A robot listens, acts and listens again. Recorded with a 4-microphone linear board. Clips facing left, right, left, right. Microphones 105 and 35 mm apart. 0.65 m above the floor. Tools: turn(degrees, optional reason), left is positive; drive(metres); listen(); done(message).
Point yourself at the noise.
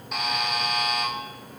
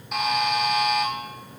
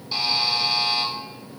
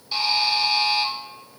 turn(degrees=30)
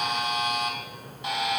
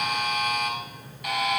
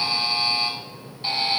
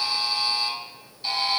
turn(degrees=150, reason="So it is at 150° left.")
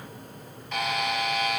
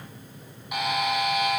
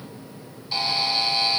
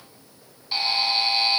turn(degrees=-15, reason="The buzzer is now 15° right.")
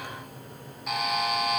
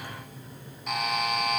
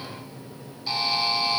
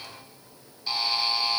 done("Found it: a buzzer, straight ahead, 1 to 2 m away.")